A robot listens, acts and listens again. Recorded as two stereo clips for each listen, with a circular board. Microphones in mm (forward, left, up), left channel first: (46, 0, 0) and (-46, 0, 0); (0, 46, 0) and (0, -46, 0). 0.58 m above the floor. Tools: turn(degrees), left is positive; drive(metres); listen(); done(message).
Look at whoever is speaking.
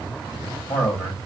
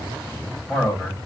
done("Found it: a man speaking, straight ahead.")